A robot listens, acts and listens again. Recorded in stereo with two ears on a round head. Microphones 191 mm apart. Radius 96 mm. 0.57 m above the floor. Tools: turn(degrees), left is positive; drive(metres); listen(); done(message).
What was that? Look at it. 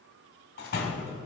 turn(degrees=50)
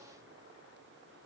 listen()
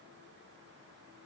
done("I heard a door slam, but can't make it out now. It was about straight ahead or 80° left.")